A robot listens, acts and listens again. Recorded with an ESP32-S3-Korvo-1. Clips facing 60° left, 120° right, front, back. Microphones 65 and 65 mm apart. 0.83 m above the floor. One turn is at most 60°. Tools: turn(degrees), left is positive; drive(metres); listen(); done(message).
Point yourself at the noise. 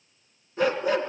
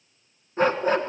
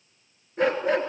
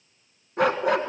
turn(degrees=-60)
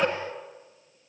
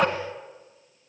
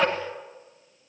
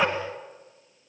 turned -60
turn(degrees=-60)
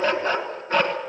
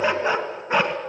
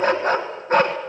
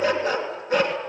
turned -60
turn(degrees=-45)
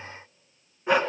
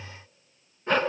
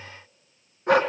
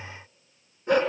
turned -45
turn(degrees=-20)
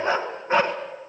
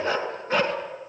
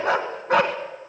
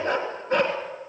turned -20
done("Found it: a dog barking, straight ahead, 2 to 4 m away.")